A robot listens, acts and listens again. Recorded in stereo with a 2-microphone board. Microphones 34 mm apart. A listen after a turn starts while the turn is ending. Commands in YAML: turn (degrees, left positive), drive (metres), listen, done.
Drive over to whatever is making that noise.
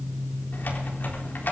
turn: 75
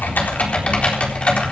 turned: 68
turn: 35
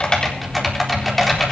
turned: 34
drive: 1.0
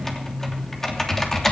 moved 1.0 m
turn: 10
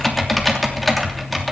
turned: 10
drive: 1.0
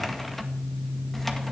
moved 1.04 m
listen: true
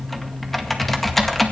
drive: 1.0
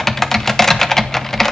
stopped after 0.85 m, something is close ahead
turn: 10
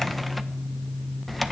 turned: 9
done: "Arrived at the typing on a keyboard, straight ahead."